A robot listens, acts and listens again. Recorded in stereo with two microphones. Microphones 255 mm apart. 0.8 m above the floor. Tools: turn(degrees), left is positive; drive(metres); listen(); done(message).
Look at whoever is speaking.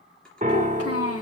turn(degrees=65)
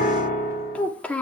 done("Found it: a child speaking, straight ahead, 1 to 2 m away.")